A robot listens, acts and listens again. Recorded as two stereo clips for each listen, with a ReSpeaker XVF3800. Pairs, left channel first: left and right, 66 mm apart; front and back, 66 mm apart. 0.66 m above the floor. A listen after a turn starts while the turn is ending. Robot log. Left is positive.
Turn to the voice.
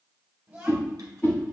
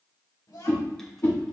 note: The child speaking: 20° right.
cmd yaw -20
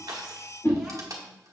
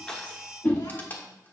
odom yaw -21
cmd idle
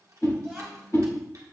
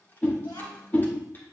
end: Facing the child speaking.